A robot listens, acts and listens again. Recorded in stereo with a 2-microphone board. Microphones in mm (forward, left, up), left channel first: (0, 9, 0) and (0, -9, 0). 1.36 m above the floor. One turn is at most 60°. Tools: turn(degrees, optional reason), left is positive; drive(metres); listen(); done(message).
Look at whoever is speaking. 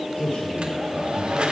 turn(degrees=60)
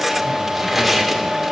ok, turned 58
turn(degrees=30, reason="Nothing new. It was at 30° left.")
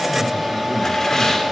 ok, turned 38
listen()
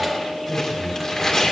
turn(degrees=15, reason="The man speaking is now 15° left.")
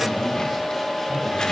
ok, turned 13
listen()
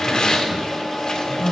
done("Found it: a man speaking, straight ahead, over 4 m away.")